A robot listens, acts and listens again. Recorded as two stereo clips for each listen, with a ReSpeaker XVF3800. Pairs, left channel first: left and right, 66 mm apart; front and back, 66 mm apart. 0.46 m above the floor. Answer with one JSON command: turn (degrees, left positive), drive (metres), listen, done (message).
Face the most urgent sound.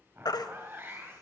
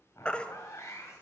{"turn": 70}
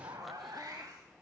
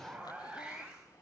{"listen": true}
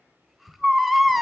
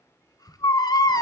{"done": "Facing the baby crying."}